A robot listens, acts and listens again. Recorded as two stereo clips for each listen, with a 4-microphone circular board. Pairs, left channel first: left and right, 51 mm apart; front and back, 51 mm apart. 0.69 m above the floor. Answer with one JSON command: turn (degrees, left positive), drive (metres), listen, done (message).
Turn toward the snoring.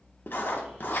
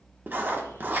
{"listen": true}
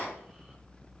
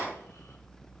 {"listen": true}
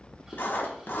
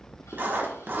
{"done": "I can't make out snoring, only writing."}